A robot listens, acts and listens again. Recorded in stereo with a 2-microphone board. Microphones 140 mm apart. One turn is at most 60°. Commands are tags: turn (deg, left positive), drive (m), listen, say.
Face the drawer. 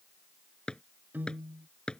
<turn deg="30"/>
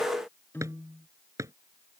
<turn deg="-20"/>
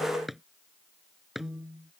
<say>Found it: a drawer, straight ahead.</say>